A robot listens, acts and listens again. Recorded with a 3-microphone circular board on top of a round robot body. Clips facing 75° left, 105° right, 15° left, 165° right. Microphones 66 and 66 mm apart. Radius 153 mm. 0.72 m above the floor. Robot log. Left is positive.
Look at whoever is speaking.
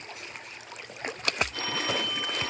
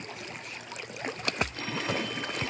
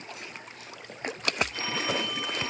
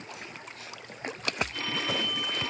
cmd idle
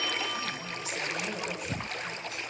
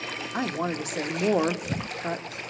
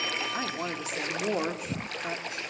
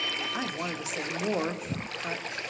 note: The woman speaking: 80° right.
cmd yaw -80
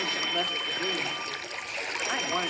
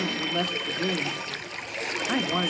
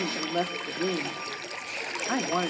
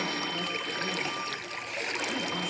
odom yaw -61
note: The woman speaking is now 20° right.
cmd yaw -20
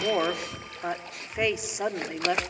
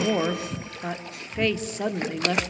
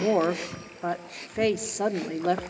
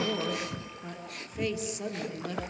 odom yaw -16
end: Facing the woman speaking, 1 to 2 m away.